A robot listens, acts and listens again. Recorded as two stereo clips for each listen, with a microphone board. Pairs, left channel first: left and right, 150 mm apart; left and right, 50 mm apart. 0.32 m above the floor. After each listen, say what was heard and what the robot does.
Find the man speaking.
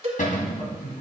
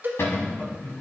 The man speaking: about 45° left or 135° left. Turn 45° left.
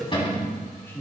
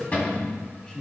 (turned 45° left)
So it is at 15° left. Turn 15° left.
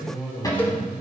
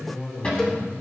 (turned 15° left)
The man speaking is now 10° left. Turn 10° left.
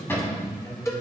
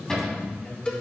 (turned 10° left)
The man speaking is now 25° left. Turn 25° left.
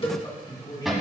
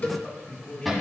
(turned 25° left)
The man speaking is now 30° left. Turn 30° left.
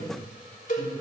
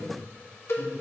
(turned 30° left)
Keep listening.
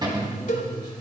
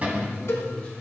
The man speaking is now 25° left. Turn 25° left.
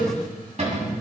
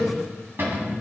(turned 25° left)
Keep listening.
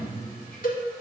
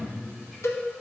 The man speaking is now 10° left. Turn 10° left.
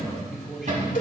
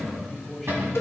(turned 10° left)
Facing the man speaking.